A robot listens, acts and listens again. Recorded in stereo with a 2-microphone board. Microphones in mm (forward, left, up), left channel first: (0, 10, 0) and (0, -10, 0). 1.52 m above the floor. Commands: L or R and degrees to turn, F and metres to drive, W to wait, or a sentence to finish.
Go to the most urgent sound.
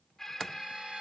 L20
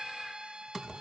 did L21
F1.0
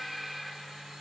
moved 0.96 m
F1.0
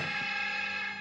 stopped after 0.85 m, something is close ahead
I am next to the alarm.